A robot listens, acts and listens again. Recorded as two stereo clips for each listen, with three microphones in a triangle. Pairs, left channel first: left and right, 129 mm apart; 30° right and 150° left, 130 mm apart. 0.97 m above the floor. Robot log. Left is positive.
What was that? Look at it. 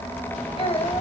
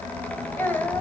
note: The child speaking: 45° left.
cmd yaw +45
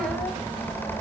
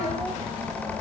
cmd idle
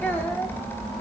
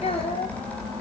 note: The child speaking is now 15° left.
cmd yaw +15
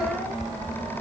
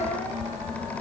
cmd idle
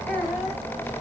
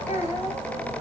note: The child speaking is now 10° left.
cmd yaw +10
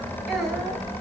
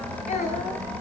end: Found it: a child speaking, straight ahead.